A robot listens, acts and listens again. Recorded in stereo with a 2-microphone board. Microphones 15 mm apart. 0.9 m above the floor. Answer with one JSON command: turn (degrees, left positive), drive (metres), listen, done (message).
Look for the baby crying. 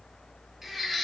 {"turn": -20}
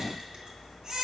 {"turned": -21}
{"turn": -140}
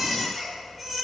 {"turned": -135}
{"done": "Found it: a baby crying, straight ahead."}